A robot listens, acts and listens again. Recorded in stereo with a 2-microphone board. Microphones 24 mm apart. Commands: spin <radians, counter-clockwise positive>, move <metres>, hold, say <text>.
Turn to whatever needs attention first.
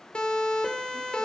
spin 0.79
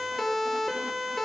say Found it: a siren, straight ahead, over 4 m away.